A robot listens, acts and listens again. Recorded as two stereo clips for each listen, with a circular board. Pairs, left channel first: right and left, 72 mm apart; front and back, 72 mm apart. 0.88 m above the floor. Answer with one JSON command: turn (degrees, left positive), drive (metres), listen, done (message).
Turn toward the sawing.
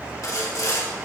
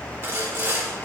{"turn": -125}
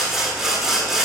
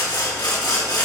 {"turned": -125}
{"done": "Facing the sawing."}